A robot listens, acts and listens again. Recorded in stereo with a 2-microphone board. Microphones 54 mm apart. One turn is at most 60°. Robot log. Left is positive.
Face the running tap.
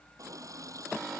cmd yaw -60
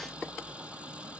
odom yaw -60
note: Nothing new. It was at 30° right.
cmd yaw -30
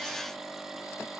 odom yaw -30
cmd idle
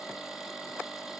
end: I heard a running tap from this way, but can't make it out now.